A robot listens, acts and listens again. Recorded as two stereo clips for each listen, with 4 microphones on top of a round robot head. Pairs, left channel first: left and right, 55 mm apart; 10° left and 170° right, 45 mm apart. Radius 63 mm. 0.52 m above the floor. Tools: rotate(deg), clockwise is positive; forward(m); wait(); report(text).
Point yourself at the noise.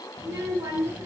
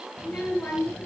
rotate(60)
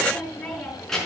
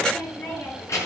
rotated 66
rotate(-10)
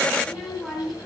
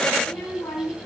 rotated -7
report("Found it: a child speaking, straight ahead, over 4 m away.")